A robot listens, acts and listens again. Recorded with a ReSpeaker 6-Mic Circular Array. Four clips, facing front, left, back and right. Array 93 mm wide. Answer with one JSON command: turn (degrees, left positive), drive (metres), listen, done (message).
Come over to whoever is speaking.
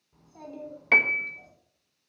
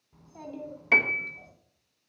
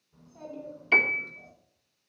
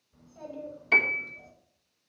{"turn": 65}
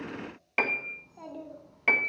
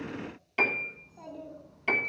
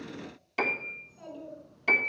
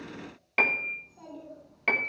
{"drive": 1.0}
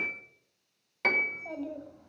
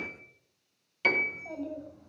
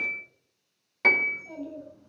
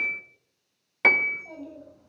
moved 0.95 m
{"drive": 1.0}
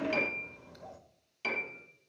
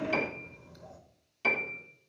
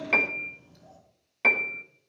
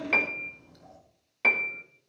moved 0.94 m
{"drive": 1.0}
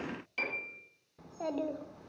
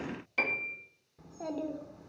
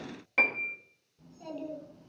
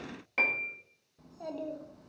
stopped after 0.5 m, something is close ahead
{"turn": 10}
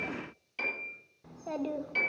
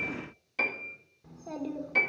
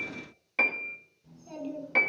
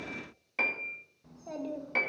{"done": "I am next to the child speaking."}